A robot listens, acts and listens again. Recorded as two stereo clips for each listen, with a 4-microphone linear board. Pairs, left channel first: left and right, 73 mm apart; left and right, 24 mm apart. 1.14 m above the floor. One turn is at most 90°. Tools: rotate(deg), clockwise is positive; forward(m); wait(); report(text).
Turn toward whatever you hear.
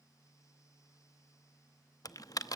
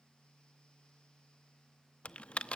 rotate(-50)
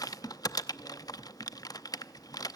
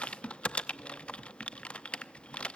rotate(-65)
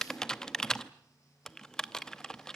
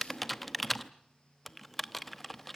rotate(-10)
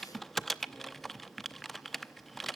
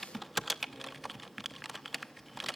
report("Facing the typing on a keyboard.")